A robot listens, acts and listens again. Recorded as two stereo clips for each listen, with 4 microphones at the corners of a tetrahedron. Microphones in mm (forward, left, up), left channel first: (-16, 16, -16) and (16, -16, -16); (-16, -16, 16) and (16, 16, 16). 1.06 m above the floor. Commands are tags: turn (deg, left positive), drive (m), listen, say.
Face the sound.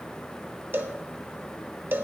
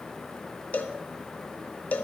<turn deg="-85"/>
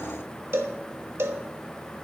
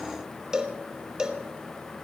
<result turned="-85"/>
<turn deg="-30"/>
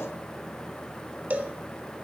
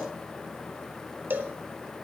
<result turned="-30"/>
<say>Facing the cowbell, 1 to 2 m away.</say>